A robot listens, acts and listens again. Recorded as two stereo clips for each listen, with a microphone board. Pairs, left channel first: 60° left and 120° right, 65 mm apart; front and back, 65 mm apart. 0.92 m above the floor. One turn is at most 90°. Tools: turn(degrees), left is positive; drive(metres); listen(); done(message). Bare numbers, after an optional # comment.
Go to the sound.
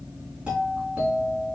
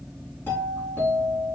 # The doorbell: 55° right.
turn(-55)
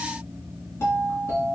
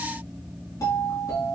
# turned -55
# The doorbell is now 10° left.
turn(10)
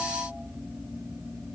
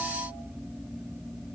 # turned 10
listen()
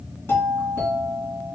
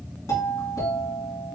drive(1.0)
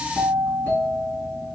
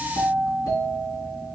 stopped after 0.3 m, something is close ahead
done("Something is in my way. I am facing the doorbell but have not reached it.")